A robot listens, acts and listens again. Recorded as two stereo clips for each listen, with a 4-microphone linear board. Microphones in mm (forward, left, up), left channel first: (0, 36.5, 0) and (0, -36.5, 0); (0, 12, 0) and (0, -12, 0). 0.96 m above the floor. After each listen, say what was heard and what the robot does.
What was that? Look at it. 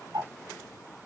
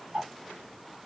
The ticking: about 70° right or 110° right. Turn 70° right.
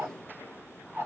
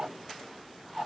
So it is at 30° right. Turn 30° right.
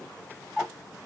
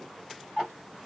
The ticking is now 15° right. Turn 15° right.
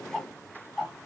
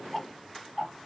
Facing the ticking, 1 to 2 m away.